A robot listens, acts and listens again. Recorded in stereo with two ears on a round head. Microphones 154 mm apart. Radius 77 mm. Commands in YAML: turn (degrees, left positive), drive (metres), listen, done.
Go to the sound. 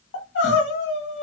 turn: 90
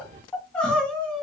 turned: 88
drive: 1.0
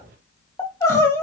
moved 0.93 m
turn: 20
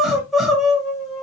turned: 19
drive: 1.0
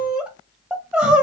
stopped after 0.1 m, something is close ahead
done: "Arrived at the crying, straight ahead."